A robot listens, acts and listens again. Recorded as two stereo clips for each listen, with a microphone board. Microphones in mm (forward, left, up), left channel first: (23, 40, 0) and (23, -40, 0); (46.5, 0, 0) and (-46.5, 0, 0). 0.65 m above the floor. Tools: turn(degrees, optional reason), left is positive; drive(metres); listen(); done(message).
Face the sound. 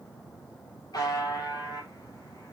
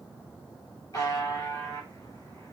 turn(degrees=50, reason="The buzzer: 50° left.")
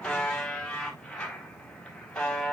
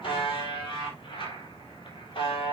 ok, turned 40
turn(degrees=10, reason="The buzzer is now 10° left.")
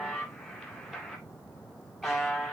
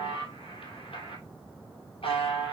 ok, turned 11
done("Found it: a buzzer, straight ahead, 2 to 4 m away.")